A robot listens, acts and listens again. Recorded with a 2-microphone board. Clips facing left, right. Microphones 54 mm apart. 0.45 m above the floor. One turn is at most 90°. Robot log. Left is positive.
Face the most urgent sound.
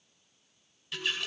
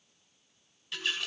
cmd idle
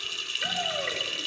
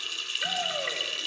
cmd yaw +30
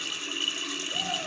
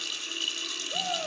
note: So it is at 30° right.
cmd yaw -30
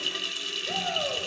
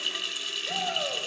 end: Facing the shout, 2 to 4 m away.